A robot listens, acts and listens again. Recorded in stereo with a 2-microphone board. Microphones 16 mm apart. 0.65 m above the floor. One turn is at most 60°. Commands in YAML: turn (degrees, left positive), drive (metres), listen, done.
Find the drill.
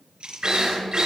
turn: -45
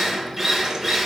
done: "Facing the drill."